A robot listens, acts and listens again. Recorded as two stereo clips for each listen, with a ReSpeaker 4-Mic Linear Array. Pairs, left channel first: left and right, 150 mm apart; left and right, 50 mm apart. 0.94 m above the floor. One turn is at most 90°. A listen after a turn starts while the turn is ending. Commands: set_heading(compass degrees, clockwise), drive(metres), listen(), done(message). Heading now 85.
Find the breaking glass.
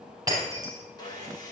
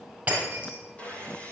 set_heading(110)
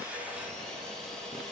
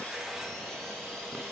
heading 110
listen()
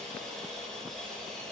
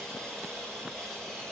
done("I heard breaking glass, but can't make it out now. It was about straight ahead or 130° right.")